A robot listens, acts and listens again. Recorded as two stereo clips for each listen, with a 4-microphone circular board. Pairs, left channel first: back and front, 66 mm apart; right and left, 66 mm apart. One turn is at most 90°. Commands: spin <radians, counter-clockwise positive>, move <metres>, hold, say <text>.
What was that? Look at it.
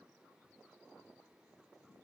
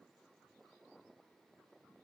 hold
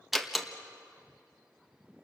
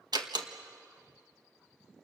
spin 1.48
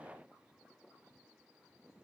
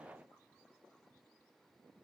say I heard a door slam from this way, but can't make it out now.